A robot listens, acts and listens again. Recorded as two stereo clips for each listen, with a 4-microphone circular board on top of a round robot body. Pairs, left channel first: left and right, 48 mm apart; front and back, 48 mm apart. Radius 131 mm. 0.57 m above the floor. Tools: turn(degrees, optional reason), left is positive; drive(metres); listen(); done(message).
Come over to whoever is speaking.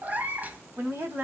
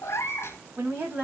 turn(degrees=-125, reason="The woman speaking: 125° right.")
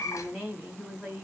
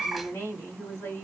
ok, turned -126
drive(metres=1.0)
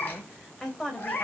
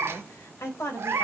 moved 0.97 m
turn(degrees=10, reason="The woman speaking is now 10° left.")
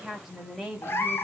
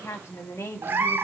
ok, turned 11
drive(metres=1.0)
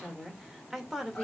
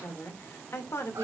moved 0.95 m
drive(metres=1.0)
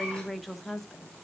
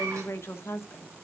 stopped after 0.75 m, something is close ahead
done("Arrived at the woman speaking, straight ahead.")